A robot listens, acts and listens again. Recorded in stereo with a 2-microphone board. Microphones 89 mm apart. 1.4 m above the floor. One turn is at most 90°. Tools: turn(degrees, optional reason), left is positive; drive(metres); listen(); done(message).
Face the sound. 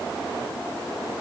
listen()
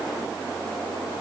listen()
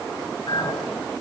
turn(degrees=65, reason="The clink: about 65° left or 115° left.")
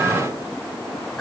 done("Facing the clink.")